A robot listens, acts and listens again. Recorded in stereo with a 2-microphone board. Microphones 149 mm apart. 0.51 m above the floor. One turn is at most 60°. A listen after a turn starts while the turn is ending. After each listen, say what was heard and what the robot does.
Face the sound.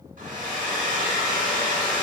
The hair dryer: about 65° right or 115° right. Turn 60° right.
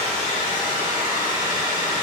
So it is at 30° right. Turn 30° right.
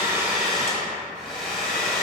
Facing the hair dryer, 1 to 2 m away.